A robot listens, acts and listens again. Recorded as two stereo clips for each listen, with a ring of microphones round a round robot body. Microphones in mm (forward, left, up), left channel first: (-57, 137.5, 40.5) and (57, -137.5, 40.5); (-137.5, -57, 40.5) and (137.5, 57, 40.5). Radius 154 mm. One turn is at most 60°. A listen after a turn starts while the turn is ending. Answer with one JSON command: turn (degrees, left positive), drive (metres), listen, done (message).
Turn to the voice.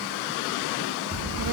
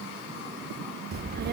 {"turn": -35}
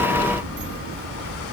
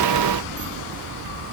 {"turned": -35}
{"turn": -15}
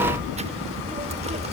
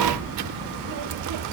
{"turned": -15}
{"done": "Found it: a child speaking, straight ahead."}